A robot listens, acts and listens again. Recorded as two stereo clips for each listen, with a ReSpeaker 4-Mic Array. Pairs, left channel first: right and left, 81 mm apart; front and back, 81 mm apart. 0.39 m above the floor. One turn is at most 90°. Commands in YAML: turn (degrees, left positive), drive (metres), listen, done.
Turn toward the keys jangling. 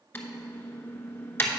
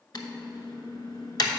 listen: true
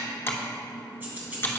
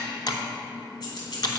turn: 20
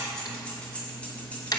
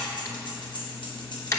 turn: -20
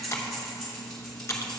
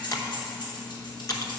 turn: -10
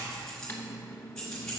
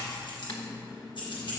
done: "Facing the keys jangling, 2 to 4 m away."